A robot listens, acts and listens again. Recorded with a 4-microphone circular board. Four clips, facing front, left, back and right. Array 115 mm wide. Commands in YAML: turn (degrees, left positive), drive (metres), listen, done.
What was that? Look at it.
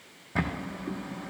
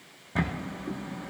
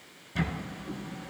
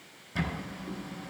turn: 40
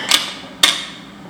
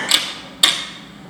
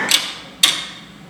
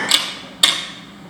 done: "Found it: a camera shutter, straight ahead."